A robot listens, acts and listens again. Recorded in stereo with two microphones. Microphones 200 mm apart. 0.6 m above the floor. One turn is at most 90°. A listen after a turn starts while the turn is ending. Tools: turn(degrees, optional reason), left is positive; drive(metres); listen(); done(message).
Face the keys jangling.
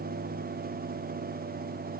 listen()
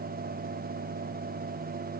listen()
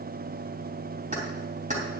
turn(degrees=-40, reason="The keys jangling: about 40° right or 140° right.")
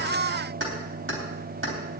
turn(degrees=-90, reason="So it is at 100° right.")
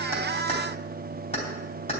turn(degrees=30, reason="The keys jangling is now 30° left.")
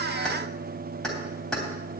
done("Facing the keys jangling, 2 to 4 m away.")